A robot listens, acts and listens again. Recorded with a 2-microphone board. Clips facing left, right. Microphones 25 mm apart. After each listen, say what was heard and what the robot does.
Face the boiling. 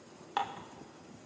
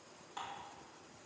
Keep listening.
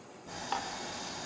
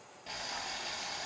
The boiling: about 65° right or 115° right. Turn 65° right.
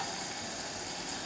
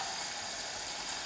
Found it: boiling, straight ahead.